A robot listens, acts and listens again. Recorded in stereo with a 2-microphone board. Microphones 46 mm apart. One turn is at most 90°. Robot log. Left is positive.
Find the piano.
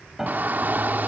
cmd yaw -30
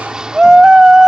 cmd idle
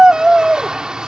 cmd idle
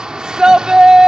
end: I heard a piano, but can't make it out now. It was about 20° left or 140° right.